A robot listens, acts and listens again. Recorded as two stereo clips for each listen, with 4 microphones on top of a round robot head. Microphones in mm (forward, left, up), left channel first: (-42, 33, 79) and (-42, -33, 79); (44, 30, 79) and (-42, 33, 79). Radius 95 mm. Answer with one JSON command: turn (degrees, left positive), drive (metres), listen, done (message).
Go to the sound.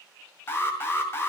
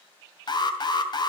{"turn": 30}
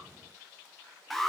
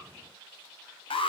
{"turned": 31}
{"drive": 1.0}
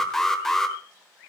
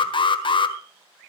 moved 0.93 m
{"drive": 1.0}
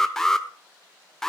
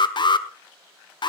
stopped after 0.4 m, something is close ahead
{"done": "Arrived at the alarm, straight ahead."}